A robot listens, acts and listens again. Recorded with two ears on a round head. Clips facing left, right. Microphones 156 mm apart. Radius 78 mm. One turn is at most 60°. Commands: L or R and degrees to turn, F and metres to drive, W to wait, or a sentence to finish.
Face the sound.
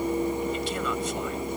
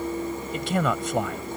R50
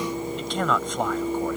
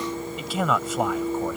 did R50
Found it: a man speaking, straight ahead.